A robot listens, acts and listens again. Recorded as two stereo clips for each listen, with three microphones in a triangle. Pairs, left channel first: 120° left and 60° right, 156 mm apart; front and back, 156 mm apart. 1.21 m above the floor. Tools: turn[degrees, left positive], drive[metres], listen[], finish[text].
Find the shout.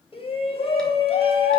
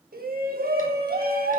Thought: The shout: 170° left.
Action: turn[170]
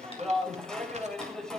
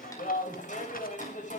Thought: The shout is now 35° left.
Action: turn[35]
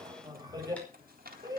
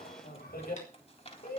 Action: finish[Facing the shout, over 4 m away.]